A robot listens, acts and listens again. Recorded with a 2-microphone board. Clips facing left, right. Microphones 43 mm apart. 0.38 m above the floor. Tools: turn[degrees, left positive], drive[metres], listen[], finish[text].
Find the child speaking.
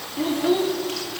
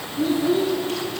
Thought: The child speaking: about 65° left or 115° left.
Action: turn[65]
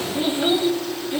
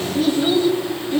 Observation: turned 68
Thought: So it is at 15° left.
Action: turn[15]
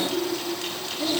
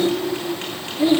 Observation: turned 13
Thought: The child speaking is now 20° right.
Action: turn[-20]
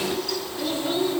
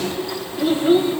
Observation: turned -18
Thought: The child speaking is now 30° right.
Action: turn[-30]
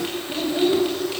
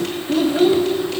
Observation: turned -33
Thought: The child speaking is now 15° right.
Action: turn[-15]
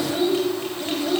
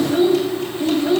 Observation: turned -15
Action: finish[Facing the child speaking, 1 to 2 m away.]